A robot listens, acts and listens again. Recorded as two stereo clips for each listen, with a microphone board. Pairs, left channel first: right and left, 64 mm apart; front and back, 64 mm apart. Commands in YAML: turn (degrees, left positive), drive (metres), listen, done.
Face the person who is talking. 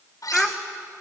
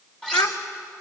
done: "Facing the child speaking."